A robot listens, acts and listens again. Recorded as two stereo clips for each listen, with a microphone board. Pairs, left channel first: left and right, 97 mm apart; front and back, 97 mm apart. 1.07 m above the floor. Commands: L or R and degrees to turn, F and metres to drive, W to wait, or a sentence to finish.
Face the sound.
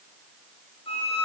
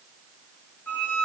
L70
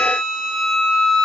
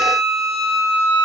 Facing the violin, over 4 m away.